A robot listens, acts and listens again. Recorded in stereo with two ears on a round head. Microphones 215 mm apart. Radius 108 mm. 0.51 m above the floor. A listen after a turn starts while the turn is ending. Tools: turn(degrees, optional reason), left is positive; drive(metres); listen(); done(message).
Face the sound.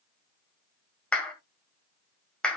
turn(degrees=30)
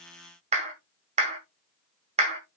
turn(degrees=-30, reason="So it is at 30° right.")
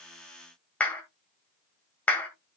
done("Facing the clap.")